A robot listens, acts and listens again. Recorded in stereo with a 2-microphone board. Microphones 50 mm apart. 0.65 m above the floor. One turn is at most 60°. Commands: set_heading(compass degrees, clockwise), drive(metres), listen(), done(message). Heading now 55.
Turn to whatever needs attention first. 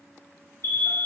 set_heading(355)
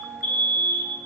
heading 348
set_heading(303)
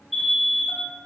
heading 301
done("Facing the alarm.")